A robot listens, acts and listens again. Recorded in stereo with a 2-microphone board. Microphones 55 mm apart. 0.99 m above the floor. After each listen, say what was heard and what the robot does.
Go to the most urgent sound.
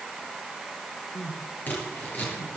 The crying: about 70° left or 110° left. Turn 70° left.
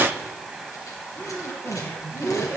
So it is at 40° left. Turn 40° left.
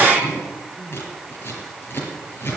Drive 1.0 m forward.
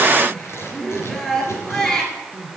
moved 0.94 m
The crying is now 10° left. Turn 10° left.
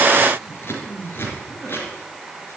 Drive 1.0 m forward.
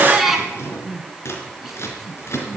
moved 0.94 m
Drive 1.0 m forward.
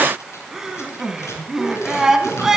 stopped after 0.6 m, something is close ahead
The crying is now 10° right. Turn 10° right.
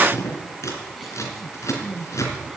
I am next to the crying.